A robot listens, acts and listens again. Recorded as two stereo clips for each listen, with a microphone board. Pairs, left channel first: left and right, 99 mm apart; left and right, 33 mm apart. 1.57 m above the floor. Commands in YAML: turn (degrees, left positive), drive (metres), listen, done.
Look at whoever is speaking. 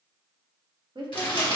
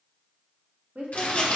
turn: -55
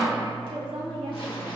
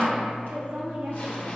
turn: -70
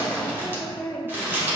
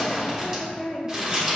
turn: 20
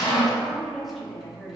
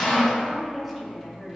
done: "Found it: a woman speaking, straight ahead."